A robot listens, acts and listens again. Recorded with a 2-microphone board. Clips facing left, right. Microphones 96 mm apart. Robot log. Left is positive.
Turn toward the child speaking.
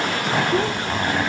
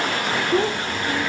cmd yaw -30
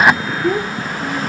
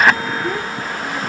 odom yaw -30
note: So it is at 15° left.
cmd yaw +15
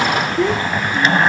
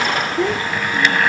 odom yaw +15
end: Facing the child speaking.